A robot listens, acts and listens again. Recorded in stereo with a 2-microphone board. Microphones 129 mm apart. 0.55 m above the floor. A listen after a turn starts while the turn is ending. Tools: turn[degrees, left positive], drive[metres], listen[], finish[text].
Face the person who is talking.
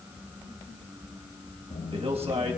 Thought: The man speaking: about 50° right or 130° right.
Action: turn[-50]
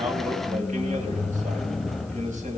Action: listen[]
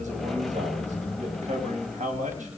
Thought: So it is at 80° right.
Action: turn[-80]
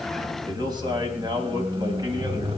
Thought: The man speaking is now 35° right.
Action: turn[-35]
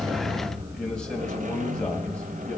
Action: listen[]
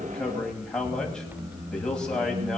Action: finish[Facing the man speaking, 2 to 4 m away.]